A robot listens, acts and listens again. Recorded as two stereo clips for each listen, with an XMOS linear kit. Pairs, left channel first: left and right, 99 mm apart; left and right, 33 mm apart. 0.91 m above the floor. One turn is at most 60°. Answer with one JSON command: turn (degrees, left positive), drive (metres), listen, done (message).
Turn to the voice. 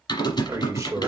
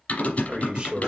{"turn": -35}
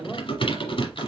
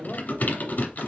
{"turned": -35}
{"done": "Facing the man speaking."}